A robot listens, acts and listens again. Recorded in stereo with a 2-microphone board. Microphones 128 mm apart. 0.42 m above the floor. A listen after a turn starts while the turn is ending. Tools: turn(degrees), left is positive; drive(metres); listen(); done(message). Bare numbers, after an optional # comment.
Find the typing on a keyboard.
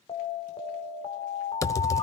# The typing on a keyboard: about 25° left or 155° left.
turn(25)
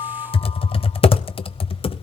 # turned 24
# So it is at 130° left.
turn(130)
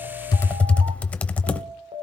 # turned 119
# The typing on a keyboard is now 10° left.
turn(10)
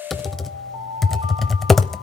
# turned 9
done("Found it: typing on a keyboard, straight ahead.")